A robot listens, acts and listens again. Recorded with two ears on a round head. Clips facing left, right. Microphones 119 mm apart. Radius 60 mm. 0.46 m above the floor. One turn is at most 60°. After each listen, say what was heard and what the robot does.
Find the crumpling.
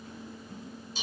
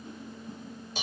Keep listening.
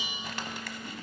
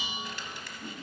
The crumpling: about 55° left or 125° left. Turn 55° left.
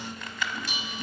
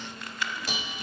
So it is at 70° left. Turn 60° left.
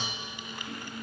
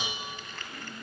The crumpling is now 15° left. Turn 15° left.
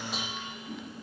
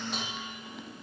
Keep listening.
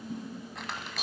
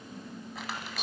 Found it: crumpling, straight ahead, 1 to 2 m away.